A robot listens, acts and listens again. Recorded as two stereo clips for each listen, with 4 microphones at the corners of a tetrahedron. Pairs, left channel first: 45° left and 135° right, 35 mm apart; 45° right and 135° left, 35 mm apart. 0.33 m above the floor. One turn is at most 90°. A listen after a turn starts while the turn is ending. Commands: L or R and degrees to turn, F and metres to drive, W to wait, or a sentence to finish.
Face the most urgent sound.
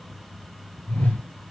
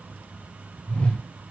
W
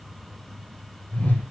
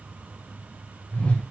W
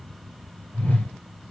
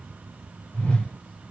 I can't make out anything urgent, only a whoosh.